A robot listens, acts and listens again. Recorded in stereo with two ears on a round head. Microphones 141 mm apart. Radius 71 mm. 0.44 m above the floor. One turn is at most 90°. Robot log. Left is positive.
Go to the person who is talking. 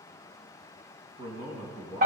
note: The man speaking: about 30° right or 150° right.
cmd yaw -30
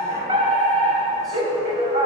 cmd idle
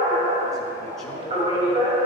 cmd idle
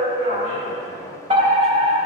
end: I heard a man speaking, but can't make it out now. It was about straight ahead or 120° right. I did not reach it.